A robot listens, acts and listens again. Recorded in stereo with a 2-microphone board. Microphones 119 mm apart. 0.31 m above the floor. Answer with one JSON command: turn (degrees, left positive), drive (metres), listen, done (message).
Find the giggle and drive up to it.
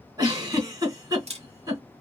{"turn": -35}
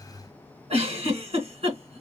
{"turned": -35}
{"turn": -105}
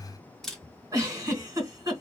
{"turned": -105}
{"turn": -35}
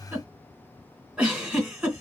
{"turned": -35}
{"turn": -10}
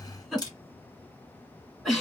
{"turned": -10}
{"drive": 1.0}
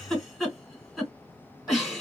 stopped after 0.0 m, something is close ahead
{"done": "Something is in my way. I am facing the giggle but have not reached it."}